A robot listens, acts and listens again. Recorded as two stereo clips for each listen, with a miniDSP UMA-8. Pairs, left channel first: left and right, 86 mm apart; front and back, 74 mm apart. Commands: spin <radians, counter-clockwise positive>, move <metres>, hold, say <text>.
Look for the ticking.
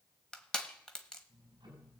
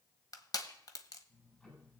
spin -1.22
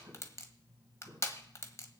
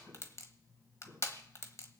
spin -0.70
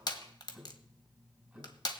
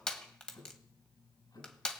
spin -0.17
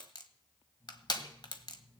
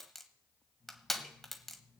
say Facing the ticking, over 4 m away.